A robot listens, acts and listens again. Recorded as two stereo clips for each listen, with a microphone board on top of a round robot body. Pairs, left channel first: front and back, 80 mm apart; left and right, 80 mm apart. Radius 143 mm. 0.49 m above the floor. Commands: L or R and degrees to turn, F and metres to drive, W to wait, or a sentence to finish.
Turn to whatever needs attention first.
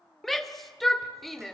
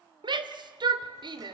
R90
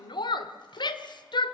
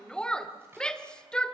L10
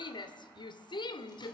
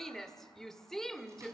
Facing the shout, 2 to 4 m away.